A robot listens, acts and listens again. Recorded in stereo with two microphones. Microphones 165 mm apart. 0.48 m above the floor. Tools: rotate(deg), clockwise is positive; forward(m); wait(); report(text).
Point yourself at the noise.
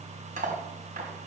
rotate(55)
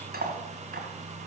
rotate(70)
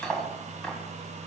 report("Found it: cutlery clinking, straight ahead, 2 to 4 m away.")